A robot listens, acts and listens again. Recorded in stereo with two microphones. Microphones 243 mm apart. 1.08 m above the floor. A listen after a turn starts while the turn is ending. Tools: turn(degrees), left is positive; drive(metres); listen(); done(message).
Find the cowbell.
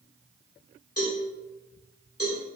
turn(degrees=90)
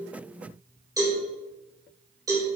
turn(degrees=-15)
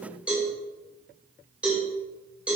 done("Found it: a cowbell, straight ahead.")